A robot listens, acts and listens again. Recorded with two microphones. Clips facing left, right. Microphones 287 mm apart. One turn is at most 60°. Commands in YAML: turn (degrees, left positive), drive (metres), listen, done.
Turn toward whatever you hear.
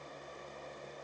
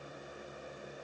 listen: true
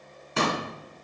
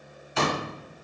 turn: 55
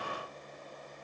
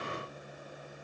listen: true
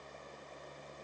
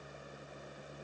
done: "I heard a pop, but can't make it out now. It was about straight ahead or 70° left."